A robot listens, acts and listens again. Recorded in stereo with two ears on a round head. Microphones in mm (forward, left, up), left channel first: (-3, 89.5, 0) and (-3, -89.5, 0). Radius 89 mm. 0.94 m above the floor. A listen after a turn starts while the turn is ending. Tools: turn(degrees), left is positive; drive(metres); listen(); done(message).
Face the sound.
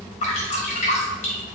turn(degrees=35)
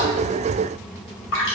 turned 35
turn(degrees=110)
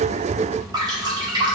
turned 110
turn(degrees=-20)
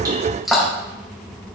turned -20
done("Facing the dripping.")